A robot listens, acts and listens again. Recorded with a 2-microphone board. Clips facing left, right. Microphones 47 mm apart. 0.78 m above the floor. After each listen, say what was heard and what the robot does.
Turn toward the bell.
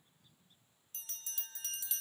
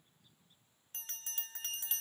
The bell: about 45° right or 135° right. Turn 45° right.
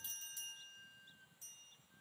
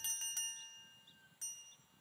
So it is at 90° right. Turn 90° right.
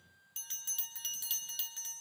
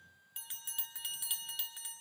The bell is now 15° right. Turn 15° right.
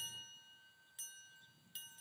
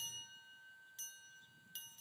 Facing the bell.